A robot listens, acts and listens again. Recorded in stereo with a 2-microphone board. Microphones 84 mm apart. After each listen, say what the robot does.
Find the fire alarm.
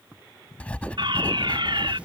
Turn 70° right.
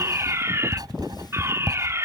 Turn 35° right.
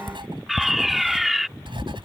Facing the fire alarm.